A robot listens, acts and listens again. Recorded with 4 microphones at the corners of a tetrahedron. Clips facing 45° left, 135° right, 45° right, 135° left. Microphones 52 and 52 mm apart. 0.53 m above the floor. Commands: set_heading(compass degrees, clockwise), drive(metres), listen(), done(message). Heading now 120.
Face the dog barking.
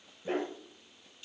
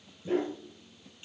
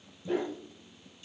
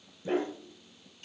set_heading(20)
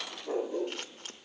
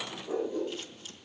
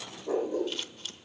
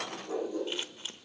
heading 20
set_heading(5)
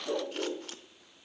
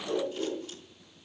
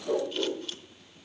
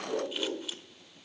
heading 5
done("Found it: a dog barking, straight ahead.")